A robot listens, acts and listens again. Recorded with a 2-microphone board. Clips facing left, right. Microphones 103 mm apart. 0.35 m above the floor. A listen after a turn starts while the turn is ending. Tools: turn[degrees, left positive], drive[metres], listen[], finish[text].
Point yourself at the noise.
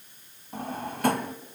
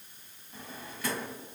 Thought: The drawer: about 55° left or 125° left.
Action: turn[55]
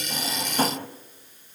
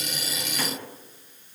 Thought: So it is at 55° left.
Action: turn[55]
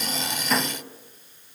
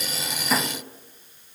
Action: finish[Found it: a drawer, straight ahead, 1 to 2 m away.]